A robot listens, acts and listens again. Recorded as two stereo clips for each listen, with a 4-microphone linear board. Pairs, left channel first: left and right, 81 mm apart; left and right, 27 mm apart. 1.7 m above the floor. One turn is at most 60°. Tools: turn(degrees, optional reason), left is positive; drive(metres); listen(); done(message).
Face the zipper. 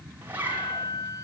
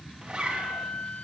turn(degrees=-25, reason="The zipper: about 25° right or 155° right.")
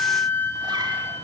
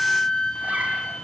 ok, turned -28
listen()
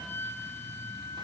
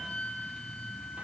listen()
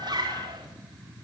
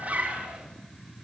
turn(degrees=-60, reason="So it is at 130° right.")
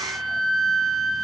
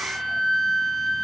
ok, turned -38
turn(degrees=-60, reason="Nothing new. It was at 90° right.")
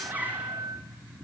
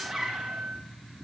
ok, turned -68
turn(degrees=-20, reason="The zipper is now 20° right.")
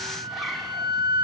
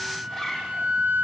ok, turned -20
done("Found it: a zipper, straight ahead, over 4 m away.")